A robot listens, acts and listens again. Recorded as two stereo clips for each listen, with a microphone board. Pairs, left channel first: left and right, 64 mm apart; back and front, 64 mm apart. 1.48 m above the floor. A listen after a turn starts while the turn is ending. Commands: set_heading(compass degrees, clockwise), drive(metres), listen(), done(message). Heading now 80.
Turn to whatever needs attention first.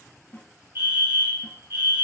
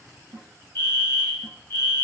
set_heading(210)
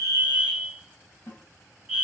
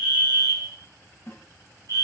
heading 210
set_heading(220)
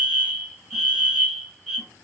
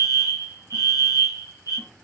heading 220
done("Found it: a fire alarm, straight ahead, 1 to 2 m away.")